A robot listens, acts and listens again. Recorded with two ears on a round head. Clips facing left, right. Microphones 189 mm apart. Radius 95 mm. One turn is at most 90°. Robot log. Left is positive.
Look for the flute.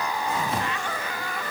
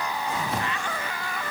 cmd idle
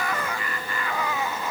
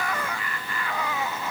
cmd idle
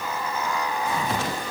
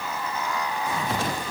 end: I can't make out a flute.